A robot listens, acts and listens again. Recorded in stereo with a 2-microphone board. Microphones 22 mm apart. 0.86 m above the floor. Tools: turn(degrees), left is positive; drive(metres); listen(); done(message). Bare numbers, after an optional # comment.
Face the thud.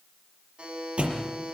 # The thud: about 65° right or 115° right.
turn(-65)
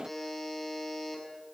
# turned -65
listen()
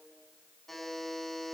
done("I heard a thud, but can't make it out now. It was about straight ahead or 50° right.")